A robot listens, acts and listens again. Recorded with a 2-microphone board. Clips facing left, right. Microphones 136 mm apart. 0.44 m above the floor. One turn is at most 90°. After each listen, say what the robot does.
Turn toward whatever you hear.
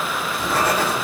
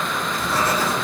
Turn 90° left.
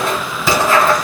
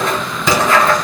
Found it: writing, straight ahead, 1 to 2 m away.